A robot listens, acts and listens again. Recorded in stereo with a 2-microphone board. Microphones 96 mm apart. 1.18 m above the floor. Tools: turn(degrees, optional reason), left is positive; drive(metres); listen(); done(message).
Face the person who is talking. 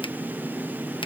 listen()
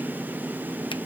listen()
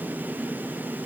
done("I can't make out anyone speaking to turn to.")